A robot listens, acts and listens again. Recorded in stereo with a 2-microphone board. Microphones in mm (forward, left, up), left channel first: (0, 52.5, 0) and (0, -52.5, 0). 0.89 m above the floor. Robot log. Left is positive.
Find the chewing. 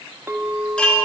cmd idle
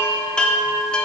cmd idle
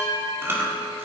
note: The chewing: about 20° right or 160° right.
cmd yaw -20
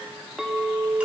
cmd idle
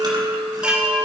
cmd idle
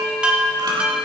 end: I heard chewing, but can't make it out now. It was about straight ahead or 140° right.